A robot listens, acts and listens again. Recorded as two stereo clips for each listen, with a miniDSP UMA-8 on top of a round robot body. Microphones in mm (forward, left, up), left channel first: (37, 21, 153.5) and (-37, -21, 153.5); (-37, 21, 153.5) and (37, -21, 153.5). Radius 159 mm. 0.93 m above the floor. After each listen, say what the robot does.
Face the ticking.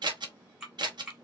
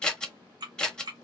Turn 70° right.
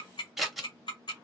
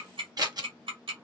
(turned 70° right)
Found it: ticking, straight ahead, 1 to 2 m away.